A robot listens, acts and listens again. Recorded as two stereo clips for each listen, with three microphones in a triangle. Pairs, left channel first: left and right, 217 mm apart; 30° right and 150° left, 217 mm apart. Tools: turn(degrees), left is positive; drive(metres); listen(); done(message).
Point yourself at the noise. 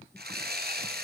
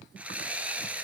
turn(degrees=-125)
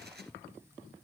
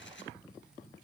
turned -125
listen()
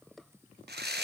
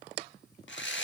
turn(degrees=-55)
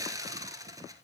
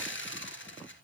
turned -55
turn(degrees=-15)
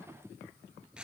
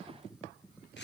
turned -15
listen()
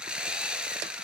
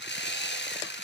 done("Found it: sawing, straight ahead.")